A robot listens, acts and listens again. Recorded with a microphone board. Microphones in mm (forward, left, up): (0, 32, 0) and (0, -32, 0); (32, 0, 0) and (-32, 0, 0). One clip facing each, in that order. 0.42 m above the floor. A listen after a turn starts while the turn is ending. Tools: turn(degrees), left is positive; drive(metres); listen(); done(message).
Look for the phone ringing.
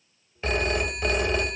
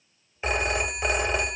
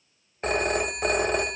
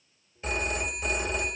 turn(degrees=-20)
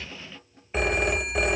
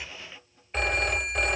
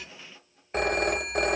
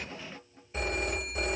done("Found it: a phone ringing, straight ahead.")